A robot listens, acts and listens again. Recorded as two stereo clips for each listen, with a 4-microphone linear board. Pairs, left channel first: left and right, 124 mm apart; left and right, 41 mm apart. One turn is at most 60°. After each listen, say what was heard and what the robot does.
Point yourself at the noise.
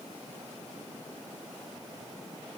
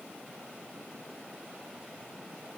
Keep listening.
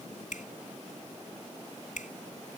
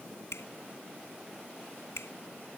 Turn 60° left.
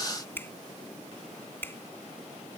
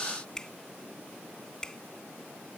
So it is at 15° left. Turn 15° left.
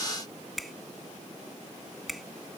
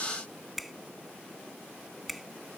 Facing the finger snap.